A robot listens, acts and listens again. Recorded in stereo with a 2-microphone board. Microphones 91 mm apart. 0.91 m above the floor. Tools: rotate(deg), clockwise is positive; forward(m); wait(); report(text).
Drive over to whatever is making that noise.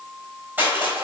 rotate(20)
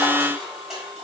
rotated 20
forward(1.0)
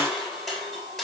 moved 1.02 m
forward(1.0)
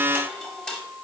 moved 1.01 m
rotate(-10)
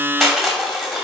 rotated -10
forward(1.0)
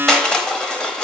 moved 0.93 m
rotate(-10)
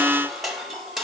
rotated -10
forward(1.0)
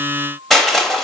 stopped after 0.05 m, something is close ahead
report("Arrived at the crushing, straight ahead.")